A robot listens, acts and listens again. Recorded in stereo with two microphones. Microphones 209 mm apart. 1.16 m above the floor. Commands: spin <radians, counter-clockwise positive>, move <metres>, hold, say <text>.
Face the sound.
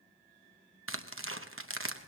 spin -1.57
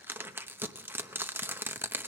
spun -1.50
spin -0.17
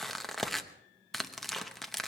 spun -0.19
say Found it: tearing paper, straight ahead, under 1 m away.